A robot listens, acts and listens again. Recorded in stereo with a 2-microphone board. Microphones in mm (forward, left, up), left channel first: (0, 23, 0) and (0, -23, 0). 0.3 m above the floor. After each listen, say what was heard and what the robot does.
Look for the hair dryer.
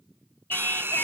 The hair dryer: about 50° right or 130° right. Turn 50° right.
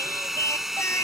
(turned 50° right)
So it is at 10° right. Turn 10° right.
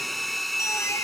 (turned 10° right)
Found it: a hair dryer, straight ahead.